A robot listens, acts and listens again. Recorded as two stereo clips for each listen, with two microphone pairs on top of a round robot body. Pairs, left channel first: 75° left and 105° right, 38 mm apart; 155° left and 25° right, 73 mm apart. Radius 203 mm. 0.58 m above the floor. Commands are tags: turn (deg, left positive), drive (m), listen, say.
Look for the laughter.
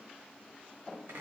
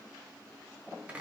<listen/>
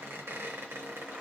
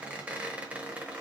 <listen/>
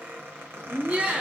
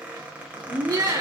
<turn deg="-45"/>
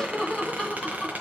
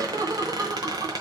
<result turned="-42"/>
<turn deg="15"/>
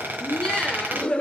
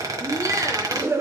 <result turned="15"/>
<turn deg="25"/>
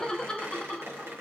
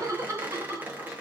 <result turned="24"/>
<turn deg="10"/>
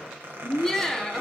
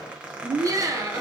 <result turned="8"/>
<say>Found it: laughter, straight ahead.</say>